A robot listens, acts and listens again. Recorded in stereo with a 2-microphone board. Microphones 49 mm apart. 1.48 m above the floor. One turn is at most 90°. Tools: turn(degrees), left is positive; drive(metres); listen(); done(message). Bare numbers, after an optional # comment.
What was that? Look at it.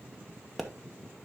turn(30)
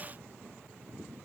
listen()
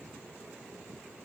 done("I heard a pop, but can't make it out now. It was about 30° right or 150° left.")